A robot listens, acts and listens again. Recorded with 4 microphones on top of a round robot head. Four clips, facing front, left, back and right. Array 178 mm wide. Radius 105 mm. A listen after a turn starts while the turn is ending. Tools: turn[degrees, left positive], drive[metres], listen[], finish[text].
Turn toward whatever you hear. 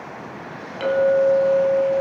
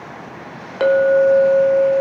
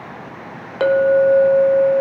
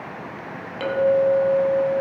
Thought: The clink: 140° left.
Action: turn[140]
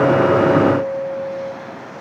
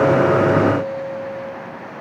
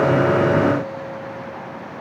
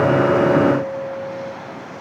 Thought: The clink is now 10° left.
Action: turn[10]
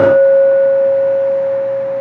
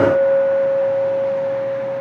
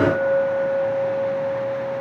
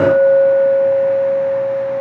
Action: finish[Facing the clink, 1 to 2 m away.]